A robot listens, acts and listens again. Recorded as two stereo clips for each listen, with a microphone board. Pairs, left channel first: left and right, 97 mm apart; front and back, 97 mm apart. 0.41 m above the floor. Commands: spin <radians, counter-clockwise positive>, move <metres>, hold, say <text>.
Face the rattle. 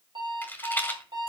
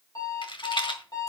spin 0.35
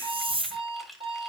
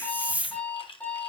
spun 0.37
hold
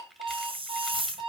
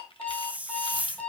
hold
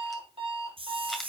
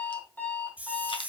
say Facing where the rattle came from. I can't hear it now.